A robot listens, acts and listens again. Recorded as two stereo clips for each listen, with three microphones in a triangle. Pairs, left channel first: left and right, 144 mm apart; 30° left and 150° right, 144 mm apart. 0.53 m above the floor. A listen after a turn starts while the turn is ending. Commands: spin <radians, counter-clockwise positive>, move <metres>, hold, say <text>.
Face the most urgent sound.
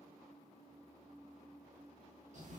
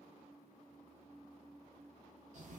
hold
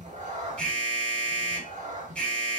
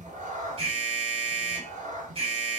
spin 2.97
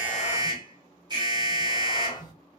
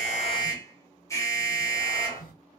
spin -0.61
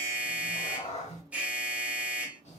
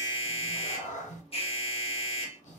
spin -0.17
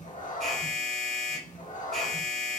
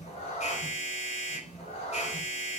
say Facing the alarm, 1 to 2 m away.